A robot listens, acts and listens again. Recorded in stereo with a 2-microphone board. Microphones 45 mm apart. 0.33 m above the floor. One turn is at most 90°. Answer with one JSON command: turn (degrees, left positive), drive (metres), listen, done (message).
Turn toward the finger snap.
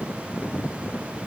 {"listen": true}
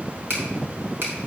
{"turn": -65}
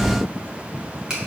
{"turn": -15}
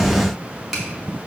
{"done": "Facing the finger snap."}